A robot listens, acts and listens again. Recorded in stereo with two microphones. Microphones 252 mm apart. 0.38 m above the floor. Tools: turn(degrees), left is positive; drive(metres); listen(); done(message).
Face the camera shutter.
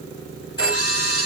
turn(degrees=65)
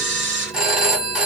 turn(degrees=50)
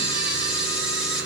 done("Facing the camera shutter.")